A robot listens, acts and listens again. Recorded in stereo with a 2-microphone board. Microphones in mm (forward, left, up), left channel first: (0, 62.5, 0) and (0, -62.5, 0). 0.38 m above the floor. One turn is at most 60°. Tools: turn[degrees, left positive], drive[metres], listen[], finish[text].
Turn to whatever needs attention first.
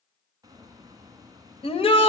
Thought: The shout: about 50° left or 130° left.
Action: turn[50]
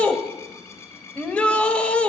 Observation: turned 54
Thought: So it is at 10° left.
Action: turn[10]
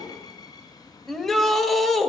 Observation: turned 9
Action: finish[Facing the shout, 1 to 2 m away.]